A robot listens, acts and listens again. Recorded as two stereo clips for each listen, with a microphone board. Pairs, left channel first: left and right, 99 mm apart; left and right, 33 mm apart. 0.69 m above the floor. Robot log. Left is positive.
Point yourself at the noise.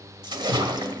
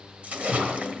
note: The splash: about 45° right or 135° right.
cmd yaw -45
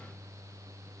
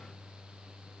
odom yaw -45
cmd idle
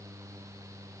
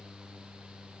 end: I heard a splash, but can't make it out now. It was about straight ahead or 90° right.